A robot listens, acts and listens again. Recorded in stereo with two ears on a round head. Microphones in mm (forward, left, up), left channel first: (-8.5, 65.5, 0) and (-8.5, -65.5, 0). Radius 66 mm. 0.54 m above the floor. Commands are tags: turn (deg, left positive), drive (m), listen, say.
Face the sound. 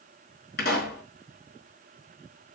<turn deg="90"/>
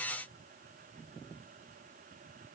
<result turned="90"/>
<say>Facing where the pop came from. I can't hear it now.</say>